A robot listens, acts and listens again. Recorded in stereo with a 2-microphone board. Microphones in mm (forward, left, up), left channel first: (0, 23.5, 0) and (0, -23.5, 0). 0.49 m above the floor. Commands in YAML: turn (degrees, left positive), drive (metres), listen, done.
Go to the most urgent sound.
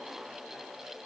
listen: true
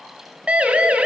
turn: -30
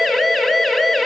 drive: 1.0
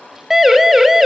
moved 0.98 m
turn: -10
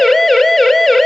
drive: 1.0
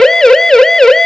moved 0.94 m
turn: 10
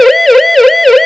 drive: 1.0
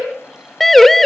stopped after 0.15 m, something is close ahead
done: "I am next to the siren."